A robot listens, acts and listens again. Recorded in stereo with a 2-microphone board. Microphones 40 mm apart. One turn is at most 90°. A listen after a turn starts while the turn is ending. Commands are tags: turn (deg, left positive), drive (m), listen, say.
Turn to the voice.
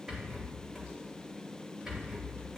<listen/>
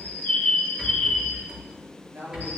<turn deg="-70"/>
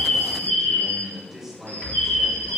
<turn deg="-10"/>
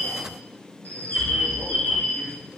<listen/>
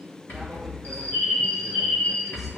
<listen/>
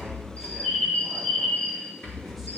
<say>Facing where the man speaking came from. I can't hear it now.</say>